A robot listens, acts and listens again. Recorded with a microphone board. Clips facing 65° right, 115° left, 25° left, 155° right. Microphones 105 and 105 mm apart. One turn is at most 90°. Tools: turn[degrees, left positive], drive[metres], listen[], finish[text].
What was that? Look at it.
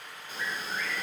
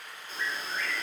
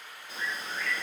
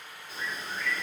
Action: finish[Facing the bird.]